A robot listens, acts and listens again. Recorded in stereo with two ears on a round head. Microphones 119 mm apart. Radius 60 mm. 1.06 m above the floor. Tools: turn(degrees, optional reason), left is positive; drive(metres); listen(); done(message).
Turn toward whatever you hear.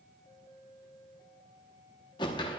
turn(degrees=35, reason="The whoosh: about 35° left or 145° left.")
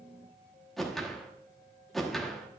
done("Found it: a whoosh, straight ahead.")